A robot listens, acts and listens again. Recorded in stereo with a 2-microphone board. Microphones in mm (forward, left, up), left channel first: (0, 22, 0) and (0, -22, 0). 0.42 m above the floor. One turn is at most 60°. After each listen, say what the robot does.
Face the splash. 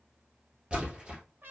Turn 25° right.
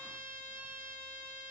Keep listening.
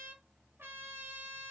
I heard a splash, but can't make it out now. It was about straight ahead or 130° right.